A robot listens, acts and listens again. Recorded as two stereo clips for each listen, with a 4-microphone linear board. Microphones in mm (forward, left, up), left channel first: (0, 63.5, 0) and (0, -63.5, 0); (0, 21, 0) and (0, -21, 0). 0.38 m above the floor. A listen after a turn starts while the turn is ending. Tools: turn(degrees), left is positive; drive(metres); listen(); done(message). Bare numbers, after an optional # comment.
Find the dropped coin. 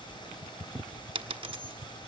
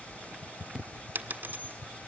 # The dropped coin: about 45° right or 135° right.
turn(-45)
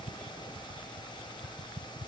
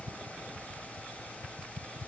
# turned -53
listen()
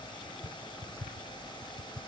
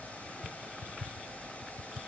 done("I heard a dropped coin, but can't make it out now. It was about 10° left or 85° right.")